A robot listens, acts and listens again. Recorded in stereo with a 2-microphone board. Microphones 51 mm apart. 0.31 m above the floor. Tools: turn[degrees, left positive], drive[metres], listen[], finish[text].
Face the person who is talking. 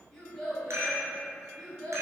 Thought: The child speaking: about 20° left or 160° left.
Action: turn[20]
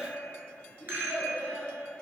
Thought: The child speaking: about 30° left or 150° left.
Action: turn[30]
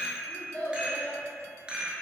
Thought: The child speaking: about 25° left or 155° left.
Action: turn[25]
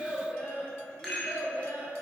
Thought: The child speaking: about 20° left or 160° left.
Action: turn[20]
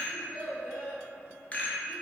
Action: finish[Found it: a child speaking, straight ahead.]